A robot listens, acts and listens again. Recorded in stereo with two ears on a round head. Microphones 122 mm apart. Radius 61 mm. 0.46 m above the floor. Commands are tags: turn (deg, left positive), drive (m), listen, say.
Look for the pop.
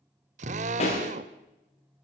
<turn deg="50"/>
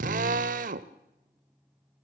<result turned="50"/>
<listen/>
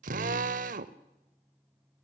<say>I heard a pop, but can't make it out now. It was about straight ahead or 80° left.</say>